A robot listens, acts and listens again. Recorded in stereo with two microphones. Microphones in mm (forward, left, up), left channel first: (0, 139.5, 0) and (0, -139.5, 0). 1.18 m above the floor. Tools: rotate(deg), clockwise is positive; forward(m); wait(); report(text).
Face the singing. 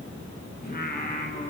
rotate(-30)
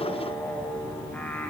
report("Found it: singing, straight ahead.")